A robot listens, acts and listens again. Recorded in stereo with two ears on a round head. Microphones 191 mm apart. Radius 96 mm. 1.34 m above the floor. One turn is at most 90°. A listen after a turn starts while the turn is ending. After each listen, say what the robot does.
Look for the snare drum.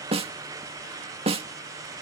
Turn 30° right.
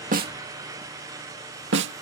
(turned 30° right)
Turn 90° right.
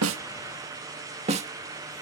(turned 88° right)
Turn 30° right.
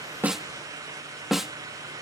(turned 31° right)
Found it: a snare drum, straight ahead.